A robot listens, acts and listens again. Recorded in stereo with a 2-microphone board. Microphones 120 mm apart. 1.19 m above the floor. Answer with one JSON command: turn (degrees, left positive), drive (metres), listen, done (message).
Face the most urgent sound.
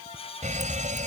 {"turn": -90}
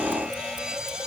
{"done": "Facing the fire alarm."}